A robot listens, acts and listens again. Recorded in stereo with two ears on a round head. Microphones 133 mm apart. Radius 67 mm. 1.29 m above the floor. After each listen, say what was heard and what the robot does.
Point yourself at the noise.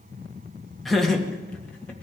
Turn 30° left.
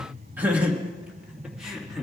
Turn 30° left.
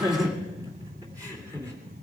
So it is at 20° right. Turn 20° right.
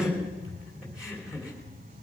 Found it: laughter, straight ahead, 2 to 4 m away.